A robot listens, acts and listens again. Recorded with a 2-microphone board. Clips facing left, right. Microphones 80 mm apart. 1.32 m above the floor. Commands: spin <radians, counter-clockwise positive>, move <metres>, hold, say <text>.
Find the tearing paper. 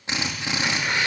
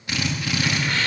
spin 0.26
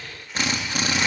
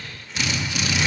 hold
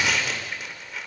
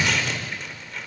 say Found it: tearing paper, straight ahead.